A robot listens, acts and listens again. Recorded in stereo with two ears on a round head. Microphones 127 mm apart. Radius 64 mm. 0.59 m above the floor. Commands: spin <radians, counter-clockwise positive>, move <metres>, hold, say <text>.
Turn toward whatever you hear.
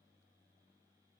hold
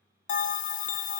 spin 1.05
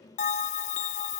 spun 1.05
spin 0.96
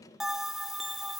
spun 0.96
say Facing the bell, under 1 m away.